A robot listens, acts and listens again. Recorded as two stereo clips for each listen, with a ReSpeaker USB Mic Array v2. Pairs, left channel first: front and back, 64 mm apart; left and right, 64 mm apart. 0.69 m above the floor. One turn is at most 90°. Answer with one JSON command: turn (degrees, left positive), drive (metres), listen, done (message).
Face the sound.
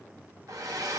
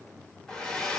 {"turn": 90}
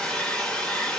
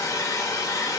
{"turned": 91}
{"turn": 80}
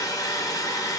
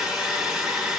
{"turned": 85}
{"turn": -10}
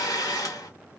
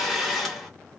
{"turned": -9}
{"done": "Facing the hair dryer."}